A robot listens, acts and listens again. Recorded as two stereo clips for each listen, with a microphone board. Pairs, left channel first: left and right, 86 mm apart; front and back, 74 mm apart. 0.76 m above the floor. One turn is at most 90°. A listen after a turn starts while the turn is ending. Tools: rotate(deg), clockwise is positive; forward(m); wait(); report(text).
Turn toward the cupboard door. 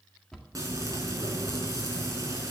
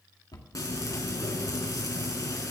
report("Facing the cupboard door.")